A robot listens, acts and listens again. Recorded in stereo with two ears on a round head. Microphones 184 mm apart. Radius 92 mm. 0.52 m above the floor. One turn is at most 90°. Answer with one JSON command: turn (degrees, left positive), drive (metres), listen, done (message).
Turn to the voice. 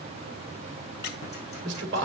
{"turn": -60}
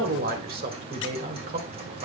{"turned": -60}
{"turn": -50}
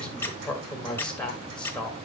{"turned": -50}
{"done": "Found it: a man speaking, straight ahead."}